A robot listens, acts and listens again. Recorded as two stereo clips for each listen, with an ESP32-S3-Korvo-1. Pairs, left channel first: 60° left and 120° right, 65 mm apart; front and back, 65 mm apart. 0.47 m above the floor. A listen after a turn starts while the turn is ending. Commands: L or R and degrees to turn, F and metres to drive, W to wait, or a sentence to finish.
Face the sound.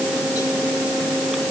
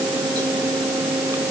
W
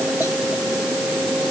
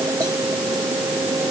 W
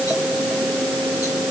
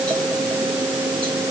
I can't make out anything to turn to.